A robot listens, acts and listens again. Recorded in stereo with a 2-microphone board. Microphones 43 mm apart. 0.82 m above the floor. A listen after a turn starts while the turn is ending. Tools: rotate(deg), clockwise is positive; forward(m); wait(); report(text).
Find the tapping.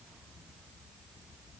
wait()
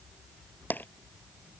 rotate(-50)
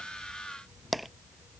report("Facing the tapping.")